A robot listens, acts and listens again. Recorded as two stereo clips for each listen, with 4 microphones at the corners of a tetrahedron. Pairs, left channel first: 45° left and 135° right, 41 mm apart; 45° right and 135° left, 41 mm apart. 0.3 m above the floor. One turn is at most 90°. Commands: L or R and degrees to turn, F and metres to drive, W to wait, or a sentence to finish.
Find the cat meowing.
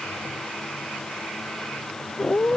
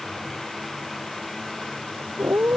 L90
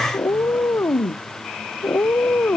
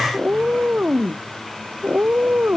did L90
L85
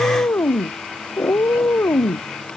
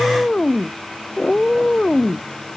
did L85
L25
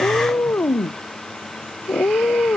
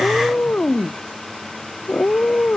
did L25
Found it: a cat meowing, straight ahead.